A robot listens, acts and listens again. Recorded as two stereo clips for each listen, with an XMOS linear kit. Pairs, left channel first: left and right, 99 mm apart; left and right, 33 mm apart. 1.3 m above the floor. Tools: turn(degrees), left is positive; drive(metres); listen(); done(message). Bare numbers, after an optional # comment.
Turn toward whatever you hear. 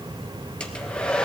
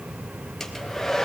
turn(30)
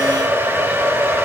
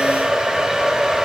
# So it is at 20° right.
turn(-20)
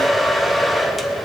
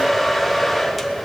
done("Found it: a hair dryer, straight ahead.")